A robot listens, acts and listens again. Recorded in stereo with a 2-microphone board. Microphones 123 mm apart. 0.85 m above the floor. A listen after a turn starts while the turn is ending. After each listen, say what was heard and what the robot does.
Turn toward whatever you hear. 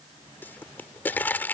The pop: about 15° left or 165° left. Turn 15° left.
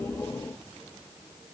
Keep listening.
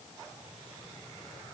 I heard a pop, but can't make it out now. It was about straight ahead or 150° left.